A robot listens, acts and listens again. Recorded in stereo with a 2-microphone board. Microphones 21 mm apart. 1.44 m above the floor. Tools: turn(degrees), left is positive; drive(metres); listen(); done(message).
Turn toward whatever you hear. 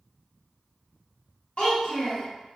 turn(degrees=55)
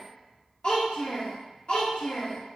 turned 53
turn(degrees=55)
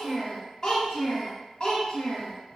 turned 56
turn(degrees=35)
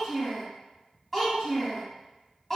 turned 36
done("Facing the child speaking.")